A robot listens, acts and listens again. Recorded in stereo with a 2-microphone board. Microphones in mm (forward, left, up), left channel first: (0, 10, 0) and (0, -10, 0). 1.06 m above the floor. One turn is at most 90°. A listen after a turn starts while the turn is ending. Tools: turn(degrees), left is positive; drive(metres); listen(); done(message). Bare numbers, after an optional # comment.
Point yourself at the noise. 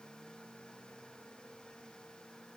listen()
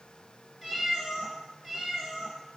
# The cat meowing: about 30° right or 150° right.
turn(-30)
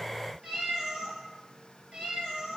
# So it is at 110° right.
turn(-90)
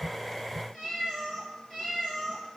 # The cat meowing is now 10° right.
turn(-10)
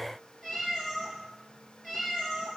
done("Facing the cat meowing.")